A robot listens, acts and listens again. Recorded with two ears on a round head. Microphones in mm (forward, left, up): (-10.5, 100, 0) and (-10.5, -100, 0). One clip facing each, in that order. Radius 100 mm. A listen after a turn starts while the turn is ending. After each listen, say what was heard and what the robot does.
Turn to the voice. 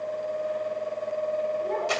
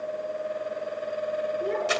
The child speaking: about 65° right or 115° right. Turn 65° right.
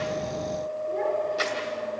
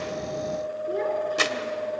So it is at 50° right. Turn 50° right.
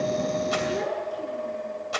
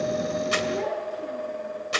Found it: a child speaking, straight ahead, over 4 m away.